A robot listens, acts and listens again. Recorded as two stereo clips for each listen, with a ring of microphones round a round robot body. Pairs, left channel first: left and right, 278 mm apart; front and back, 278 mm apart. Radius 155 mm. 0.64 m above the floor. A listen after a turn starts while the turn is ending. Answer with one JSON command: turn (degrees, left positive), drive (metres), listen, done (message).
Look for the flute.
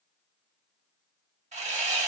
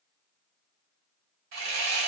{"listen": true}
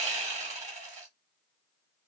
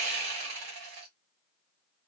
{"listen": true}
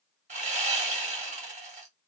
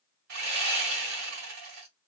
{"done": "I can't make out a flute to turn to."}